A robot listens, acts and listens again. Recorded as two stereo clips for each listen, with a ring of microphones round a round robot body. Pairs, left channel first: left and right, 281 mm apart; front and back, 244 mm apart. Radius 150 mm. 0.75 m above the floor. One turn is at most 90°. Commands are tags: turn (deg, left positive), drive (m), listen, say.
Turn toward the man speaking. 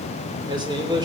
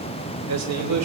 <turn deg="-90"/>
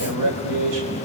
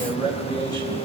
<turn deg="-80"/>
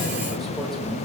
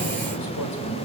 <listen/>
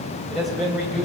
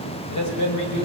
<say>Facing the man speaking.</say>